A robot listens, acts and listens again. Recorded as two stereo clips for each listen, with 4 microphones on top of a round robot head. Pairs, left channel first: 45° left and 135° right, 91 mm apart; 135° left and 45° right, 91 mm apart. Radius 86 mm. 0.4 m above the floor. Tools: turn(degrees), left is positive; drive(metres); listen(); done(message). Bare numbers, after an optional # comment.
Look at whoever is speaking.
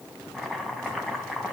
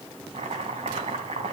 listen()
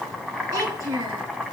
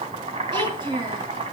# The child speaking: 85° right.
turn(-85)
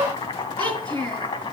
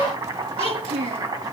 # The child speaking is now 30° right.
turn(-30)
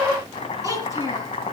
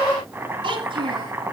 # The child speaking is now 10° right.
turn(-10)
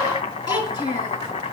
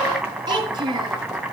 done("Facing the child speaking.")